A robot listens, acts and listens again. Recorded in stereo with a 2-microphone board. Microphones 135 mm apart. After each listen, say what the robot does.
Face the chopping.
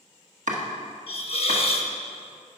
Turn 65° right.
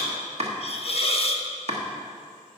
Turn 50° right.
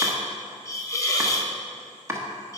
Turn 20° right.
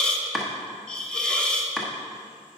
Facing the chopping.